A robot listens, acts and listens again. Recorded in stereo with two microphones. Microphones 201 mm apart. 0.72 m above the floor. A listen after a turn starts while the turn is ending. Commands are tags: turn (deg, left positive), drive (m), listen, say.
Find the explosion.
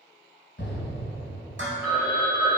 <turn deg="65"/>
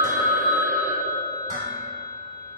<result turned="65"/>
<listen/>
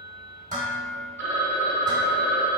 <say>I heard an explosion, but can't make it out now. It was about straight ahead or 50° left.</say>